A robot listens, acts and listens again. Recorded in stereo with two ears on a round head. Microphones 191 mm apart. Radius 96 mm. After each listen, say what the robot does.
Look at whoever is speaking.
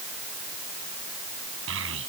Turn 75° right.
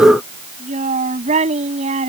Turn 35° right.
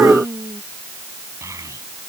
Turn 15° right.
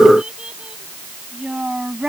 Found it: a child speaking, straight ahead.